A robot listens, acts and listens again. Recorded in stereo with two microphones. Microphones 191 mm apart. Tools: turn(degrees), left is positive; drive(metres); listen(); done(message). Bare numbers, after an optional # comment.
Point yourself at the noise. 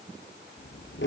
turn(90)
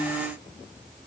listen()
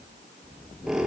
done("Facing the squeak.")